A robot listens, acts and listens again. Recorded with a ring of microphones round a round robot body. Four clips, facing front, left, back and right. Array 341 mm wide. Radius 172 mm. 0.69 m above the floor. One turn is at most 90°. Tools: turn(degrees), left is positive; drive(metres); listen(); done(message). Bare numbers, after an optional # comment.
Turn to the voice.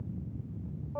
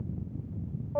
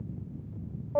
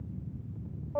listen()
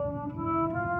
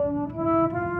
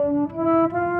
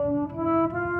listen()
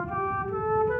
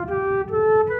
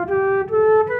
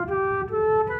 done("I can't make out anyone speaking, only a flute.")